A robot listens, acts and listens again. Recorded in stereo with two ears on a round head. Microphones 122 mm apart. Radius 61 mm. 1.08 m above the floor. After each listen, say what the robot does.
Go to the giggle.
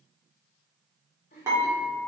Turn 55° left.
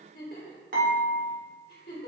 Turn 70° left.
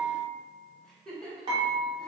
Drive 1.0 m forward.
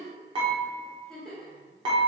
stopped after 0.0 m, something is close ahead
Blocked. The giggle is further on, straight ahead.